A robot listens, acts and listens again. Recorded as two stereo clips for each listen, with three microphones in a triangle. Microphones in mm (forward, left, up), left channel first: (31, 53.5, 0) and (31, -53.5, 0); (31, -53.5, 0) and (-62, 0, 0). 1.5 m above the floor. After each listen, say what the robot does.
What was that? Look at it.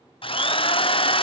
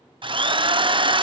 Turn 115° left.
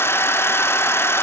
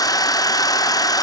Turn 25° left.
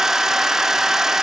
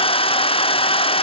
Found it: a drill, straight ahead, 1 to 2 m away.